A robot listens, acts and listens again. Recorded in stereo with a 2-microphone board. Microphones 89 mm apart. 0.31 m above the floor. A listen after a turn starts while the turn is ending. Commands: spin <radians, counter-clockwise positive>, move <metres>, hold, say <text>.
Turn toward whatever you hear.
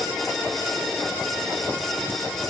hold
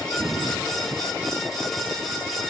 hold
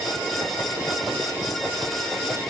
say I can't make out anything to turn to.